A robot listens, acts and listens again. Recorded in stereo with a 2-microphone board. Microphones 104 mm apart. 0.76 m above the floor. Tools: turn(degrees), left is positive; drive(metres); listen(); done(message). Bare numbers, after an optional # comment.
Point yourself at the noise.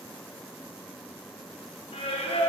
turn(90)
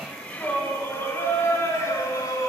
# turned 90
# So it is at 35° left.
turn(35)
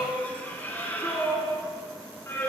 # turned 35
# The singing is now 25° left.
turn(25)
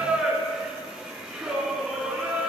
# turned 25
done("Found it: singing, straight ahead, 2 to 4 m away.")